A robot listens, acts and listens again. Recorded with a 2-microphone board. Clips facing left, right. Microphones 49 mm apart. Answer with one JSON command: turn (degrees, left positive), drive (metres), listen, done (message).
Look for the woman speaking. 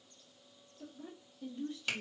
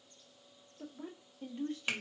{"turn": -60}
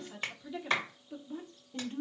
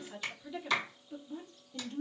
{"turn": 25}
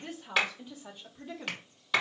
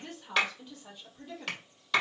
{"turn": 20}
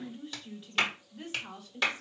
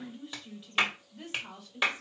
{"done": "Facing the woman speaking, 1 to 2 m away."}